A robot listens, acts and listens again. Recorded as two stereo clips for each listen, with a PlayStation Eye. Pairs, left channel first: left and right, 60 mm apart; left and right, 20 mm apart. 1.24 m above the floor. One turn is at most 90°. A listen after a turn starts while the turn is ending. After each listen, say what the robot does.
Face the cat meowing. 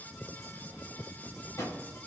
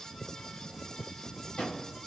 Keep listening.
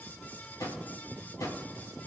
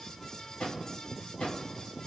Keep listening.
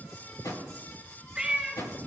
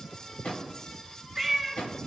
Turn 30° right.
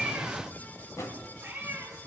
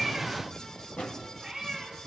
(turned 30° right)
Turn 90° right.
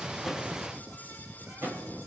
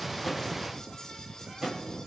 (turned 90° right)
Turn 55° right.
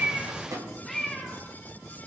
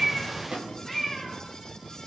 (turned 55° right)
Found it: a cat meowing, straight ahead.